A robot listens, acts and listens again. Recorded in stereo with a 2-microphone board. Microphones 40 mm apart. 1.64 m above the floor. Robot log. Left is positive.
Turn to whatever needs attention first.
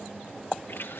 cmd idle
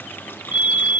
note: The fire alarm: about 40° right or 140° right.
cmd yaw -40
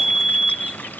note: So it is at 10° right.
cmd yaw -10
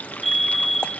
end: Facing the fire alarm.